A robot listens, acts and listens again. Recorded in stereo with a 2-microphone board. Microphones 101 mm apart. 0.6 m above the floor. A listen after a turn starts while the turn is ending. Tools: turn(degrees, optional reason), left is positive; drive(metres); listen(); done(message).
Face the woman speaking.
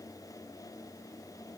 listen()
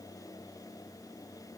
listen()
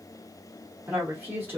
turn(degrees=-20, reason="The woman speaking: about 20° right or 160° right.")
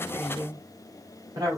turn(degrees=-140, reason="So it is at 140° right.")
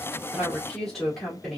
done("Facing the woman speaking.")